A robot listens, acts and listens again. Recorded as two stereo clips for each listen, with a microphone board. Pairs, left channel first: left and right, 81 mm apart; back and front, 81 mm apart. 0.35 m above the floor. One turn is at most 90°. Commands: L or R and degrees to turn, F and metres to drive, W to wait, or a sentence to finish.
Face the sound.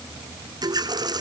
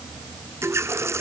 R55
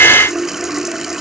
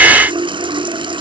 Found it: a running tap, straight ahead.